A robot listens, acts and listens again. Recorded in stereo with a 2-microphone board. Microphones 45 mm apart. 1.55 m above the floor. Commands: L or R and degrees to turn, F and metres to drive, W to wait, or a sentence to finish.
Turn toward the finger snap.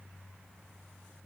W
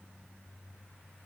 W
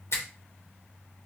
L75
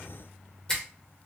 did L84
L15
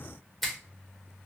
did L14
Facing the finger snap.